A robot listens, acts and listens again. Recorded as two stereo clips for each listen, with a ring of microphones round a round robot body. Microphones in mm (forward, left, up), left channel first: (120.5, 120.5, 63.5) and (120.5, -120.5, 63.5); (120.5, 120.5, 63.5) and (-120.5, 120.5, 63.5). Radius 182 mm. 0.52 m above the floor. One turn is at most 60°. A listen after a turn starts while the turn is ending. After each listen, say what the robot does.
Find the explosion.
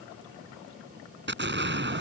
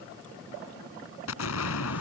Turn 45° right.
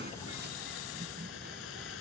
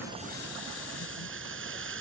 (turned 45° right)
Facing where the explosion came from. I can't hear it now.